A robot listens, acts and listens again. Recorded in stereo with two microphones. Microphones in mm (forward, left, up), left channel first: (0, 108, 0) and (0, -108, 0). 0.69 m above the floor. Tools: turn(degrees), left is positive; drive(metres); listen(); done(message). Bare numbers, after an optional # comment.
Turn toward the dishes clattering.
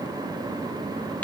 listen()
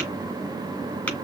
listen()
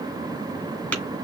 done("I can't make out dishes clattering, only tapping.")